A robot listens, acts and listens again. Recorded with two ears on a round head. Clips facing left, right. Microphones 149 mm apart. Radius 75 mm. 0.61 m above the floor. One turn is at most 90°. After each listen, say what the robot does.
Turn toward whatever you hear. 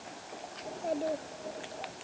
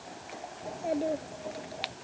Turn 15° right.
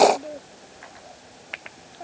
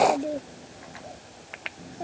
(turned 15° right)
Turn 35° right.
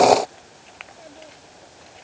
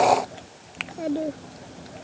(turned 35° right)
Turn 90° right.
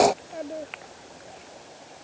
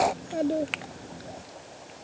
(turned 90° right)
Turn 40° right.
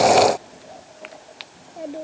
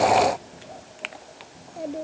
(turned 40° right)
Found it: a child speaking, straight ahead.